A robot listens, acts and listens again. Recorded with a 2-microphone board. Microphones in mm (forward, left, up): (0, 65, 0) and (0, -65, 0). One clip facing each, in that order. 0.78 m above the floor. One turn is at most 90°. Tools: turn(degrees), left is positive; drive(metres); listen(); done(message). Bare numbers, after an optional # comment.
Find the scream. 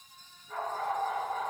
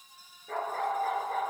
listen()
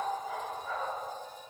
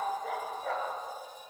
listen()
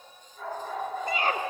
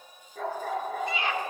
# The scream: about 45° left or 135° left.
turn(45)
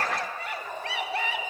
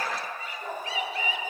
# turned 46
# So it is at 85° left.
turn(85)
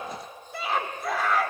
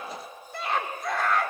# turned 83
done("Found it: a scream, straight ahead.")